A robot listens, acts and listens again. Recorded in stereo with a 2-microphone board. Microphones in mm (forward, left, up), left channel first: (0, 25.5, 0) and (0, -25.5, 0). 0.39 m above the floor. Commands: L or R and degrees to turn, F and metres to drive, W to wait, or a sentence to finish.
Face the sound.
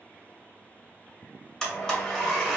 L30
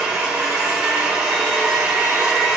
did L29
R20
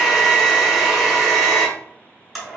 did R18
Found it: a blender, straight ahead.